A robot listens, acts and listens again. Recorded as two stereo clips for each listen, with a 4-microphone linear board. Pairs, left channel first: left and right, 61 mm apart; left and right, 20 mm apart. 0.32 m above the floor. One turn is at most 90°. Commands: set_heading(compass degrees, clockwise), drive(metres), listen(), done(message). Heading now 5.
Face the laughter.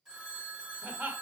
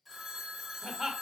set_heading(30)
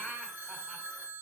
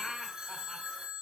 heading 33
done("Facing the laughter, 1 to 2 m away.")